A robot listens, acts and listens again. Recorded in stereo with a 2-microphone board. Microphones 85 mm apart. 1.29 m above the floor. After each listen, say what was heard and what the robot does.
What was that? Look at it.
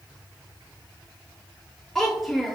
Turn 30° right.
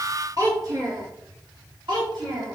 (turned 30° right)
So it is at 110° right. Turn 110° right.
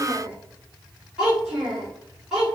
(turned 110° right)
Found it: a child speaking, straight ahead.